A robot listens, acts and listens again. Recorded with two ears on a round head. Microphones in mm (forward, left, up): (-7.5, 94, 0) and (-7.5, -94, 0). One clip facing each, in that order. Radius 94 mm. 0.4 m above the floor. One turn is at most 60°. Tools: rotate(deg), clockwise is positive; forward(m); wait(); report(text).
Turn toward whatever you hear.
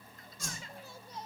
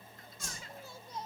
rotate(-60)
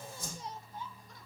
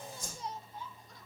rotate(-55)
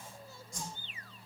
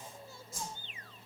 report("Found it: a whoosh, straight ahead, over 4 m away.")